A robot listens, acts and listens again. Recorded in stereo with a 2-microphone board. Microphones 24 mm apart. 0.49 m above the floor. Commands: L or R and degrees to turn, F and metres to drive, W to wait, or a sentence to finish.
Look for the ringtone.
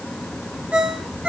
R65
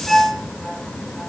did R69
Facing the ringtone.